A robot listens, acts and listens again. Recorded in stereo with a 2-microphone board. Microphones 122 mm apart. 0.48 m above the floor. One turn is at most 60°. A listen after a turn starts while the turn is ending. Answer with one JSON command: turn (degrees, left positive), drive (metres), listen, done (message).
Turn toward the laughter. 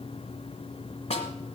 {"listen": true}
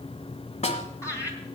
{"turn": 25}
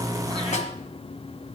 {"listen": true}
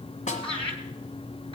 {"turn": 60}
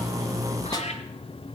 {"turn": 60}
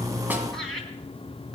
{"done": "Facing the laughter, 2 to 4 m away."}